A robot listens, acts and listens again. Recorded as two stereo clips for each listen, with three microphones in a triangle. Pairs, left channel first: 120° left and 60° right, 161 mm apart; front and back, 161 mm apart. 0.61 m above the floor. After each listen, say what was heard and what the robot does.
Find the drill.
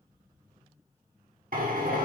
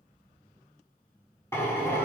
The drill: 70° right. Turn 70° right.
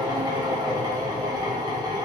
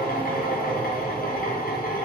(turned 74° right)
Facing the drill, under 1 m away.